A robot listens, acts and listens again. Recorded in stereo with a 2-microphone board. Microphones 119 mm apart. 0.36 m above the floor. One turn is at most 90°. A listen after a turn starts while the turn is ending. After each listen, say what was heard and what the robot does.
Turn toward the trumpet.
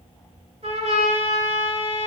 The trumpet: about 60° right or 120° right. Turn 60° right.
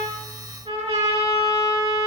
So it is at 60° right. Turn 60° right.
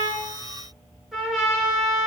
Found it: a trumpet, straight ahead.